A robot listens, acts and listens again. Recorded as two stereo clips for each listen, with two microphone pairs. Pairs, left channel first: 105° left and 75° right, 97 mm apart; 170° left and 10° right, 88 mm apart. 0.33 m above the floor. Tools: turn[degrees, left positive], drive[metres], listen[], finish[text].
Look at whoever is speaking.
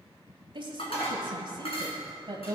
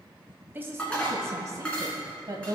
Thought: The woman speaking: 40° right.
Action: turn[-40]
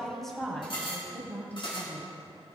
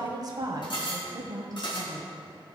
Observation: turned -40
Thought: The woman speaking is now 35° left.
Action: turn[35]
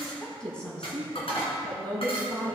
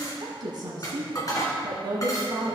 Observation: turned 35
Thought: The woman speaking is now 30° left.
Action: turn[30]
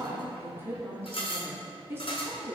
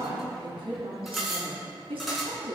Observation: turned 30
Thought: The woman speaking is now 10° right.
Action: turn[-10]
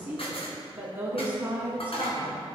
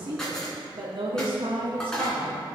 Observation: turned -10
Action: finish[Facing the woman speaking.]